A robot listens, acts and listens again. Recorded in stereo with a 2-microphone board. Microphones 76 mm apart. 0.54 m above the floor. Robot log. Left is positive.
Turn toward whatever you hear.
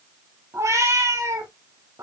note: The cat meowing: about 50° right or 130° right.
cmd yaw -50
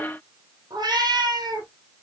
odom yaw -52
note: So it is at 65° right.
cmd yaw -65
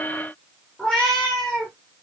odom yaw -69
note: The cat meowing is now 10° left.
cmd yaw +10
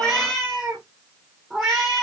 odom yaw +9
end: Found it: a cat meowing, straight ahead, over 4 m away.